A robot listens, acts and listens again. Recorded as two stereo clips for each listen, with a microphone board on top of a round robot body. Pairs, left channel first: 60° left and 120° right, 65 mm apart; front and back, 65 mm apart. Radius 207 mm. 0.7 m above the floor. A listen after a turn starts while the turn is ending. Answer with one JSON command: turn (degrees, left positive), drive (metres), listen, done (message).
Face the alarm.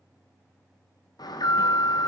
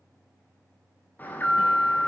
{"turn": 60}
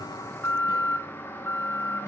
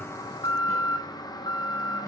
{"done": "Found it: an alarm, straight ahead."}